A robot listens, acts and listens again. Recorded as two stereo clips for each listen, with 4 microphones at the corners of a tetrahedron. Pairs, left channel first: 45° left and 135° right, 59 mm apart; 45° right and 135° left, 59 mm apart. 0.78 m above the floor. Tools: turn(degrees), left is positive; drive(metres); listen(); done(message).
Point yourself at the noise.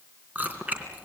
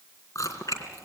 turn(degrees=-70)
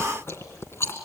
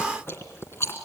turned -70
done("Found it: chewing, straight ahead, 2 to 4 m away.")